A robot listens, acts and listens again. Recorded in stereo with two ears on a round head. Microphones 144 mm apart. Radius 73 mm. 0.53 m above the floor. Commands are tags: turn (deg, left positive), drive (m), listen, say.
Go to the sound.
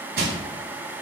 <turn deg="-70"/>
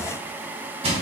<turn deg="-40"/>
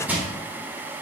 <turn deg="-10"/>
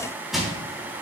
<drive m="1.0"/>
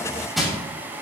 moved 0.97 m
<drive m="1.0"/>
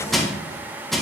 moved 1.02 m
<drive m="1.0"/>
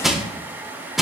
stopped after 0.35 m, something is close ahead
<say>Arrived at the crushing, straight ahead.</say>